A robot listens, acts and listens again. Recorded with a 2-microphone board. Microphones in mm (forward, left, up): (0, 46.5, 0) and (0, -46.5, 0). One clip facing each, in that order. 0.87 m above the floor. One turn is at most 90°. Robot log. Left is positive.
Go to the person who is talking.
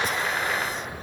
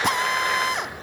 cmd idle
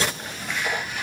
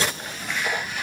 cmd idle
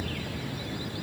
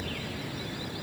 end: I can't make out anyone speaking, only a drill.